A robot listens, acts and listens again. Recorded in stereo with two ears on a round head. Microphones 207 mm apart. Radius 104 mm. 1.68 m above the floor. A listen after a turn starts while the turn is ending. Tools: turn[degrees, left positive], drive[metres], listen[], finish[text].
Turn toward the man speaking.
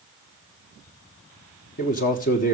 Thought: The man speaking: about 35° left or 145° left.
Action: turn[35]
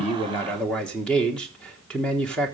Action: finish[Facing the man speaking.]